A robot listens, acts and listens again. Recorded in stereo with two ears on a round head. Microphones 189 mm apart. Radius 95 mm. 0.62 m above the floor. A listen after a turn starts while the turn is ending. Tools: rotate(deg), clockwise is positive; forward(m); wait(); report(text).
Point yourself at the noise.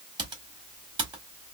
rotate(20)
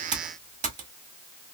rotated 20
rotate(135)
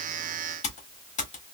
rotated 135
rotate(-40)
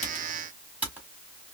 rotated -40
rotate(10)
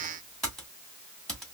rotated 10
report("Found it: typing on a keyboard, straight ahead, 1 to 2 m away.")